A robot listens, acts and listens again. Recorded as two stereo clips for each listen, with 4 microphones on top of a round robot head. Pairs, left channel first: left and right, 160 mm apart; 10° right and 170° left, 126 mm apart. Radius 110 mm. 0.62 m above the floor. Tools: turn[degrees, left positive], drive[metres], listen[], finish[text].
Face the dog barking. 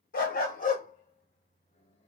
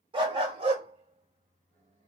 Thought: The dog barking: 125° left.
Action: turn[125]
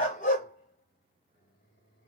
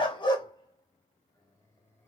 Thought: The dog barking is now 40° left.
Action: turn[40]
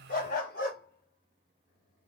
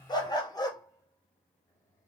Thought: The dog barking is now 50° left.
Action: turn[50]
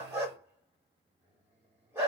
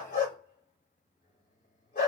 Thought: The dog barking is now 10° right.
Action: turn[-10]
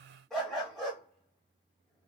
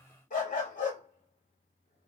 Action: finish[Found it: a dog barking, straight ahead.]